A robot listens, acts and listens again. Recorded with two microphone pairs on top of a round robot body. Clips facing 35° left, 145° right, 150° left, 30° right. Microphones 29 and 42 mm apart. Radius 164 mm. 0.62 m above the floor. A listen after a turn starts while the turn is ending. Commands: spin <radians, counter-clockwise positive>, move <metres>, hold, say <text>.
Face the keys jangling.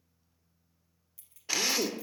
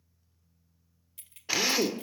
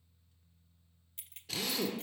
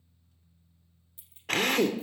spin 3.05
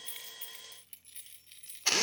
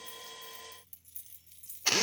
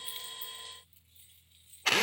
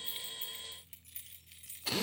spin -0.35
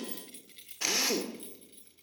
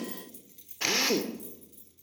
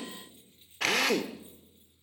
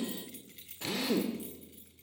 spin -0.35
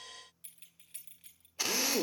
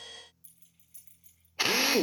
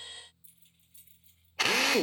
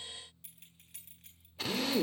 say Facing the keys jangling, 2 to 4 m away.